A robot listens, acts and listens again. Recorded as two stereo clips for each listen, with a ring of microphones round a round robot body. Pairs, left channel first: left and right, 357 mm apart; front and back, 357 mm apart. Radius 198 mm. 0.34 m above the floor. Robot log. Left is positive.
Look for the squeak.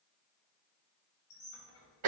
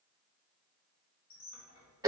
note: The squeak: 40° left.
cmd yaw +40
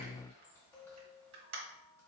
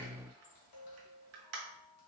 end: Found it: a squeak, straight ahead, 1 to 2 m away.